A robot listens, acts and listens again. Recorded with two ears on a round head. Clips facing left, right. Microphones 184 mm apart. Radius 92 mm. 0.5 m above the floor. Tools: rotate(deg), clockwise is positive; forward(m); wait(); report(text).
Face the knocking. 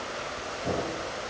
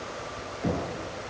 rotate(90)
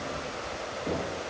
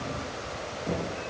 rotate(-10)
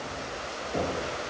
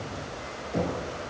report("Found it: knocking, straight ahead, over 4 m away.")